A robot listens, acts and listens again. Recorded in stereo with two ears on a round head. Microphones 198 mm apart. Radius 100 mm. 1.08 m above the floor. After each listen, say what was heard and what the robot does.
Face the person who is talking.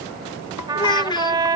The child speaking: about 20° left or 160° left. Turn 20° left.
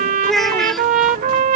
Facing the child speaking.